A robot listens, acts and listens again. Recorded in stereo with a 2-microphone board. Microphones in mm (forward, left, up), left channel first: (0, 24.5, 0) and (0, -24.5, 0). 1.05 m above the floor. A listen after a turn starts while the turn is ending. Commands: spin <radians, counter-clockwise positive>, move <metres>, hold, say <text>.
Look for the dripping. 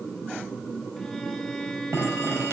spin -1.22
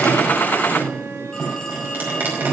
spin -0.70
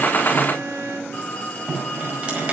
spin -0.35
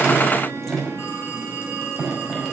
say Facing the dripping, over 4 m away.